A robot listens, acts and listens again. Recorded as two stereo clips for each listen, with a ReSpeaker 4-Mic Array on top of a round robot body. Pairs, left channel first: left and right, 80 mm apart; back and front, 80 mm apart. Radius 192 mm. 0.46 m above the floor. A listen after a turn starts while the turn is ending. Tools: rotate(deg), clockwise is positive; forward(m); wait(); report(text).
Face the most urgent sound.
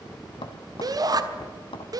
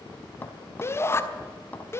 rotate(125)
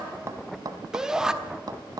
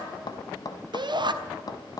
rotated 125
rotate(10)
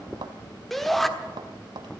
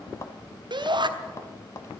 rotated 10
report("Found it: a shout, straight ahead.")